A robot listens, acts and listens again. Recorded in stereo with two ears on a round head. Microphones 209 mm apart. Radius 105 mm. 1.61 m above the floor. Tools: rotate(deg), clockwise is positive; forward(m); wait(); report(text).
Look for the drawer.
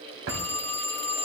rotate(60)
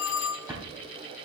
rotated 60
rotate(15)
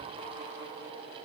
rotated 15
wait()
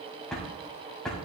report("Found it: a drawer, straight ahead.")